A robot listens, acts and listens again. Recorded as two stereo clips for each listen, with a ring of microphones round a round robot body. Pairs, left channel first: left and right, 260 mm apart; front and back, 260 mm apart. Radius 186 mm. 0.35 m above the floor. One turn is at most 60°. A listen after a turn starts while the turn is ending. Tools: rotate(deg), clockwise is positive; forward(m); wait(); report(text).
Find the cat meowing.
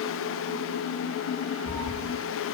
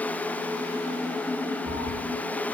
rotate(10)
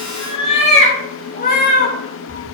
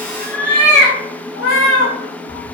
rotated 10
rotate(-40)
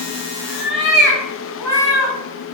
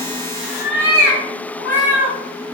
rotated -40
rotate(-15)
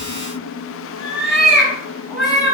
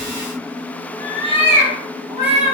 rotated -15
report("Facing the cat meowing.")